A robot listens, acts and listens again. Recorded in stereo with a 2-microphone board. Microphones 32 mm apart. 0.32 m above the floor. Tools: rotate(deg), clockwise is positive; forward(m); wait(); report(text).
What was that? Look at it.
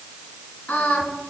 rotate(-65)
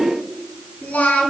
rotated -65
rotate(-65)
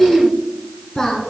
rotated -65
rotate(-20)
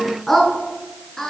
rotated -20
rotate(-15)
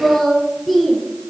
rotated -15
report("Found it: singing, straight ahead.")